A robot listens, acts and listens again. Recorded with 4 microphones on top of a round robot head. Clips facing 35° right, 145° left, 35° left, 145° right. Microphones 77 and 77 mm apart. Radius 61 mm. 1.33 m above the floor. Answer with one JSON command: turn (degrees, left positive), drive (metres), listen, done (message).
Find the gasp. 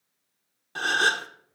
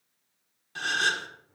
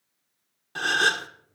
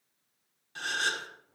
{"done": "Found it: a gasp, straight ahead."}